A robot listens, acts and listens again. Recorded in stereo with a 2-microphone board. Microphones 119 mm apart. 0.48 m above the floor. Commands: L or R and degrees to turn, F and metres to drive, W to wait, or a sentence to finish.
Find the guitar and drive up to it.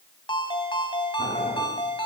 W
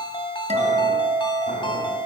R90
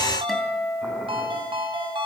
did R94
F1.0
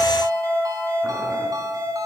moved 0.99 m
F1.0
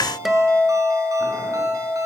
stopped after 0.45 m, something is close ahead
I am next to the guitar.